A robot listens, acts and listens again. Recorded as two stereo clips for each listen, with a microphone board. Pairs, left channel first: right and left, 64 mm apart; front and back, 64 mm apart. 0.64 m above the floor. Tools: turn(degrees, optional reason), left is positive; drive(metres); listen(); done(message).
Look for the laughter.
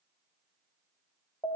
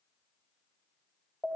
listen()
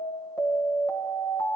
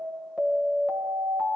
listen()
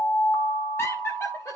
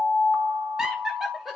turn(degrees=-90, reason="The laughter: 90° right.")
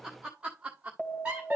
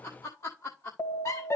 turn(degrees=25, reason="The laughter is now 25° left.")
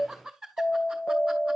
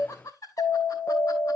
done("Found it: laughter, straight ahead.")